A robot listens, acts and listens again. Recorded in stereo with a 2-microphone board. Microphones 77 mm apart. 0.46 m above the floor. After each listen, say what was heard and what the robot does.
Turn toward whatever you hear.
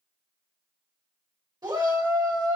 The shout: about 60° right or 120° right. Turn 60° right.
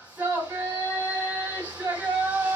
So it is at 25° right. Turn 25° right.
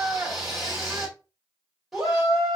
Found it: a shout, straight ahead, 1 to 2 m away.